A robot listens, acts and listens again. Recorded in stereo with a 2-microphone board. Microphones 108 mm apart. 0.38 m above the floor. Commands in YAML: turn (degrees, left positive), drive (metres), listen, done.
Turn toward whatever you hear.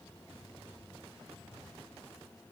listen: true
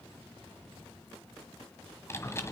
turn: 25
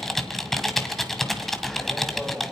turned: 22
done: "Found it: typing on a keyboard, straight ahead."